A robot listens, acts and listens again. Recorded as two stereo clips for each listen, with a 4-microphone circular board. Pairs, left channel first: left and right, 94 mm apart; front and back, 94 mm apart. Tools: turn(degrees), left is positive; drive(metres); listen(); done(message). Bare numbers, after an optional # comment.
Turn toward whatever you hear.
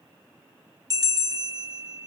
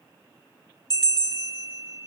# The bell: 40° right.
turn(-40)
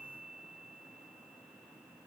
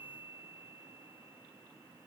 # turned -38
listen()
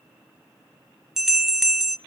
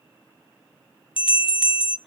done("Found it: a bell, straight ahead, 1 to 2 m away.")